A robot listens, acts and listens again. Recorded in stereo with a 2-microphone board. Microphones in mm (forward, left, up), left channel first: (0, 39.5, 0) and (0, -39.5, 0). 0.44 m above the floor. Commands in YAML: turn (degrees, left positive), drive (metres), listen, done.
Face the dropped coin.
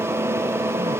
listen: true
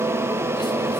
listen: true
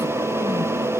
done: "I can't make out a dropped coin to turn to."